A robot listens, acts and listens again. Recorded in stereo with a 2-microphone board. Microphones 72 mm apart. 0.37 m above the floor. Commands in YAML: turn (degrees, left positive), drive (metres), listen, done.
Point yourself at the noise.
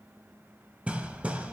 turn: -20
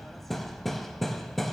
done: "Facing the hammering, under 1 m away."